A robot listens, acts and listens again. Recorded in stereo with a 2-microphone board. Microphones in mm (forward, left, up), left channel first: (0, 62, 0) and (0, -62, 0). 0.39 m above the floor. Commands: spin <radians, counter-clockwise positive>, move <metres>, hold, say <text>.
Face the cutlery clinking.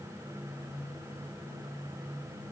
hold
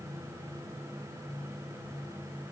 hold
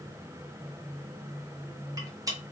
spin -0.52
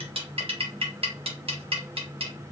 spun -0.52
spin -2.01
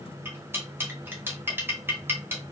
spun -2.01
spin -0.35
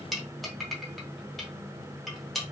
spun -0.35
say Found it: cutlery clinking, straight ahead, under 1 m away.